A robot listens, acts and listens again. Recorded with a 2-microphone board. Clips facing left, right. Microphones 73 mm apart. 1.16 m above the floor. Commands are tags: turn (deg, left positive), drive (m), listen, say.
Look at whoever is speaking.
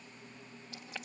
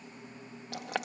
<listen/>
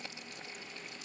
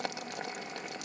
<listen/>
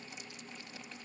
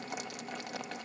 <say>I can't make out anyone speaking to turn to.</say>